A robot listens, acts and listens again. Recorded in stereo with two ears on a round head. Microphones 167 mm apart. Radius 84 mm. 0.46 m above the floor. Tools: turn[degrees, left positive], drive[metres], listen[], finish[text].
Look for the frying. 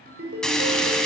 Action: turn[30]
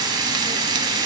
Thought: So it is at 25° right.
Action: turn[-25]
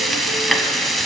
Action: finish[Found it: frying, straight ahead, under 1 m away.]